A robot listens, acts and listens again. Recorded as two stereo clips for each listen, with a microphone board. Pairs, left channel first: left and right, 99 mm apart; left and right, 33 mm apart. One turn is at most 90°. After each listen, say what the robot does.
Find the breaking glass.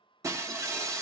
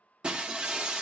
Turn 30° right.
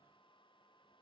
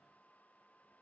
Keep listening.
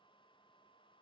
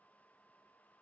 I heard breaking glass, but can't make it out now. It was about straight ahead or 120° right.